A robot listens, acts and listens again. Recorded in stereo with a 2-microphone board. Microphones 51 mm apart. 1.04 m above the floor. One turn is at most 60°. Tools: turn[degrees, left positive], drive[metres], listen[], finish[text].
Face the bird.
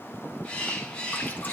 Thought: The bird: about 15° left or 165° left.
Action: turn[15]
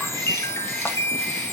Action: listen[]
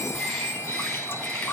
Action: listen[]
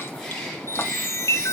Action: finish[I heard a bird, but can't make it out now. It was about straight ahead or 150° left.]